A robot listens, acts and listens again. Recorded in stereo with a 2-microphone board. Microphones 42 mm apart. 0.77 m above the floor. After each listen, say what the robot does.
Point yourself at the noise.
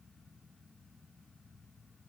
Keep listening.
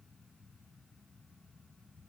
Keep listening.
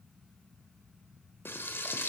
Turn 65° left.
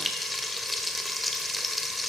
Found it: frying, straight ahead, 1 to 2 m away.